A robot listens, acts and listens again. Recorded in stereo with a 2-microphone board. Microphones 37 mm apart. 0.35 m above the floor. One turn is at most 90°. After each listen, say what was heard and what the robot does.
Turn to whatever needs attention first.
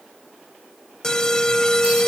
The alarm: about 20° left or 160° left. Turn 20° left.
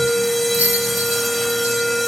Facing the alarm.